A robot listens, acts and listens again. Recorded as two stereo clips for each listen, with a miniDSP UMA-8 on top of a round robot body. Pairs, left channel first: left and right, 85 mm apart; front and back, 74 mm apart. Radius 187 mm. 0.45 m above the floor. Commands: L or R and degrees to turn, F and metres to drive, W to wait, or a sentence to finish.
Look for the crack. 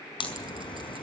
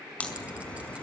L75
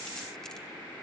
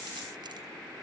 Facing where the crack came from. I can't hear it now.